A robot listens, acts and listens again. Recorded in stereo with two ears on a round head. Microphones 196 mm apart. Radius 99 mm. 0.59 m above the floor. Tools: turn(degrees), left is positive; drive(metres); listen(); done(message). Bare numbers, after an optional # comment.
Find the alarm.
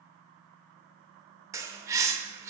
listen()
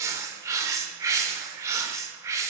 listen()
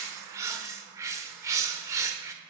done("I can't make out an alarm, only a bird.")